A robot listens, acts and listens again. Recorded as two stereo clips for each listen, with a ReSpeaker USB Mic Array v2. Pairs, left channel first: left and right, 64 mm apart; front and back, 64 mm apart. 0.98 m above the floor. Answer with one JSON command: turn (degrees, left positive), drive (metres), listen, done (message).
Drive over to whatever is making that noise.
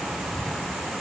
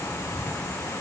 {"listen": true}
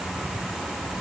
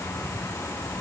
{"listen": true}
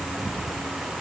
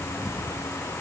{"done": "I can't make out anything to turn to."}